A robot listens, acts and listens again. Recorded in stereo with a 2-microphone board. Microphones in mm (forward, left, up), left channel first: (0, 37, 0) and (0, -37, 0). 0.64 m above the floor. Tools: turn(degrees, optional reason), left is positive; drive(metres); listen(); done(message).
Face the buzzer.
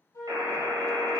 turn(degrees=-90)
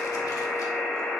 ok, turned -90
done("Found it: a buzzer, straight ahead.")